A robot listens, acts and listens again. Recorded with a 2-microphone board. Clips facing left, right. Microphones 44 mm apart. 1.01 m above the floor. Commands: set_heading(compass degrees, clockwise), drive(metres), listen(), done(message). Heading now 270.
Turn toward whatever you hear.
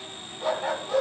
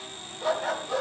set_heading(240)
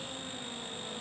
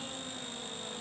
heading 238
listen()
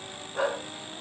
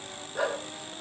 set_heading(103)
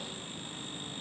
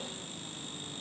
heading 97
listen()
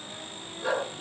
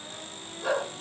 set_heading(107)
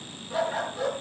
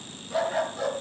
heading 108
done("Found it: a dog barking, straight ahead, over 4 m away.")